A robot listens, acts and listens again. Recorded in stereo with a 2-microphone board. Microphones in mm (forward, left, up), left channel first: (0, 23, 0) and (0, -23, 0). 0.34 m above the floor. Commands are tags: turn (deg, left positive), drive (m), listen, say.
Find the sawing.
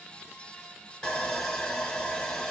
<turn deg="20"/>
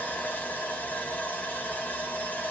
<turn deg="135"/>
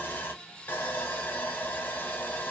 <turn deg="50"/>
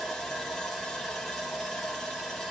<say>Facing the sawing, under 1 m away.</say>